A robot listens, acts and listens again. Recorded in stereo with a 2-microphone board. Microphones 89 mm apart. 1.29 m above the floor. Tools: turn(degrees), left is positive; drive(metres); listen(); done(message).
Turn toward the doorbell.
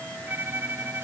listen()
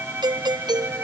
turn(degrees=-55)
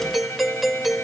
done("Found it: a doorbell, straight ahead.")